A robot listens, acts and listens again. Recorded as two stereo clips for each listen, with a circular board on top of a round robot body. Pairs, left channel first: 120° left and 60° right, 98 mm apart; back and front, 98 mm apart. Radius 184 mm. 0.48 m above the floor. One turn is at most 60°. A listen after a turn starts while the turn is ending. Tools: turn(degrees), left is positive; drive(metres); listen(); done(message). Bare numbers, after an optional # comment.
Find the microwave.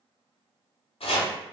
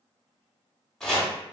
listen()
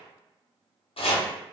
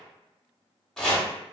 listen()
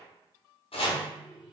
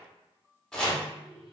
# The microwave: 30° left.
turn(30)
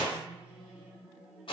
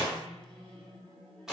# The microwave is now 20° left.
turn(20)
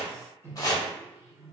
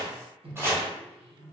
done("Facing the microwave, under 1 m away.")